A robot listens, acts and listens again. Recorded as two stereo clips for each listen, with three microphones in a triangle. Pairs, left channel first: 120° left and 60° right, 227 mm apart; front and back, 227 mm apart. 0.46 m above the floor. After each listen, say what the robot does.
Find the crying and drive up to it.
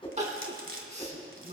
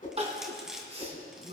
Turn 115° right.
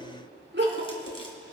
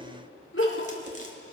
Turn 25° right.
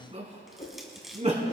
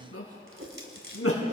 Drive 1.0 m forward.
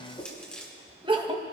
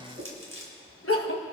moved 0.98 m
Drive 1.0 m forward.
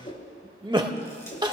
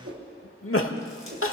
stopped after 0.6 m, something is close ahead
Turn 10° left.
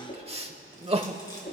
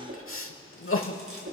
Arrived at the crying, straight ahead.